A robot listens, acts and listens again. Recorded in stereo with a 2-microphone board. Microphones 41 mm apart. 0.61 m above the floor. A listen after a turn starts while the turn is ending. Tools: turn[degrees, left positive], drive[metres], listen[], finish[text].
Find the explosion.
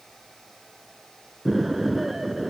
Action: turn[-30]
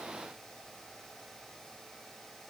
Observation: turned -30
Action: listen[]
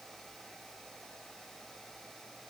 Action: finish[I heard an explosion, but can't make it out now. It was about 25° left or 145° right.]